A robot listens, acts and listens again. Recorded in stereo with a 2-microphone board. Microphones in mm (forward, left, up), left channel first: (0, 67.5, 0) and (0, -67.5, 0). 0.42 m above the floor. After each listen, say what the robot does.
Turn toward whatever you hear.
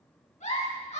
Turn 90° left.
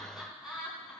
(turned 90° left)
Found it: a giggle, straight ahead.